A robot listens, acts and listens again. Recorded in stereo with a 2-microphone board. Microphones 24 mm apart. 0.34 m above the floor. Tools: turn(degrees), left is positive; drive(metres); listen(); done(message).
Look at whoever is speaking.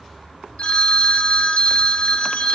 listen()
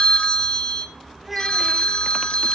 turn(degrees=-30)
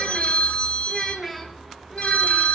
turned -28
turn(degrees=30)
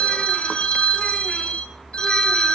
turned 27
listen()
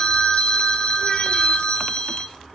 listen()
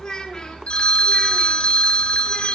turn(degrees=145)
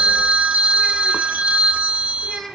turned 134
turn(degrees=10)
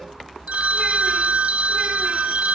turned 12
listen()
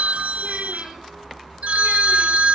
listen()
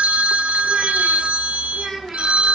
done("Facing the child speaking.")